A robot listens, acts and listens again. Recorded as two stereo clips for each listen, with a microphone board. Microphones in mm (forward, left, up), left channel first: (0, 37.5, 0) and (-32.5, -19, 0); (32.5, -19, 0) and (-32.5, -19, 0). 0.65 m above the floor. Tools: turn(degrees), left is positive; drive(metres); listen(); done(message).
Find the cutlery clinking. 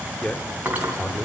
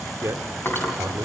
turn(degrees=-55)
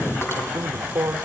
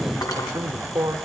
turn(degrees=10)
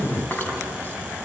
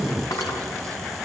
done("Facing the cutlery clinking, 2 to 4 m away.")